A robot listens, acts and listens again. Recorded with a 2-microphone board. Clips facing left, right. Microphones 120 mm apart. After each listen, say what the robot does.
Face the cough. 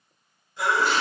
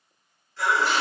Turn 15° left.
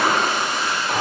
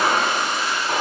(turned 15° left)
Keep listening.
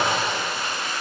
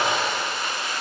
Keep listening.
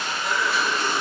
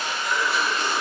Turn 150° left.
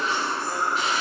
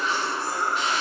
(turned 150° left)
Turn 10° right.
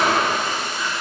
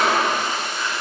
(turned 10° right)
Keep listening.
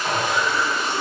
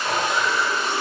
Found it: a cough, straight ahead, 1 to 2 m away.